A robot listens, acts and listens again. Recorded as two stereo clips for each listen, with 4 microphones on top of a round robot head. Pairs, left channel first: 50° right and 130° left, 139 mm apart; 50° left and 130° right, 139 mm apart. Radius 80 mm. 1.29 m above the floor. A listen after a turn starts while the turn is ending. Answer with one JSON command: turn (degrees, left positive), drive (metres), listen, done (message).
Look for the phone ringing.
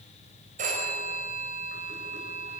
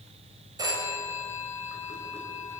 {"turn": 165}
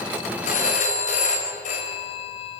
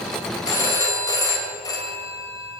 {"turn": -15}
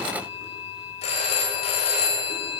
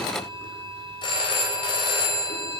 {"done": "Found it: a phone ringing, straight ahead."}